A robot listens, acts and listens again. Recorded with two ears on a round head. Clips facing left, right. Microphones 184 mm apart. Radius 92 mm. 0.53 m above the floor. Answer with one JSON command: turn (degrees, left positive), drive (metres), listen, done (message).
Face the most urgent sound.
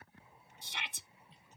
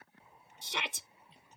{"turn": -60}
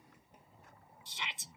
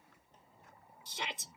{"turn": -45}
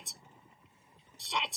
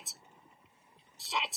{"done": "Facing the shout."}